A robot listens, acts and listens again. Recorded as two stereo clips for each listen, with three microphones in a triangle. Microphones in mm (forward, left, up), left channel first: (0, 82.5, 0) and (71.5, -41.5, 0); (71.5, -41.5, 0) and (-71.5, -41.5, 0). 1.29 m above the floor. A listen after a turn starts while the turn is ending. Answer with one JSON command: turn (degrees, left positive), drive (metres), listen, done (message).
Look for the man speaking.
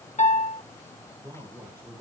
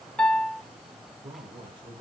{"turn": -120}
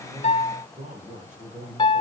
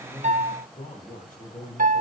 {"turn": -25}
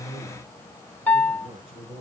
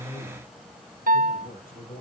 {"turn": -10}
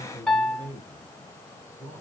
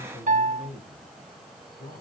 {"done": "Found it: a man speaking, straight ahead, over 4 m away."}